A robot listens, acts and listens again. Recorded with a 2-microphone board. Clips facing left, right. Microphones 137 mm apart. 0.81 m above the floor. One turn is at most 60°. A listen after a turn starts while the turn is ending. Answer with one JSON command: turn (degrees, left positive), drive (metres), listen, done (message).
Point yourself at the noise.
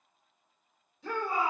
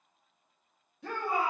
{"turn": -60}
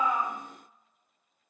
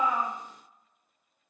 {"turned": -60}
{"listen": true}
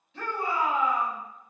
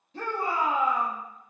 {"turn": -45}
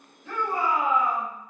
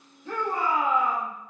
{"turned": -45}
{"turn": 10}
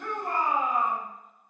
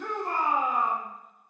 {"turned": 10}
{"done": "Found it: a shout, straight ahead."}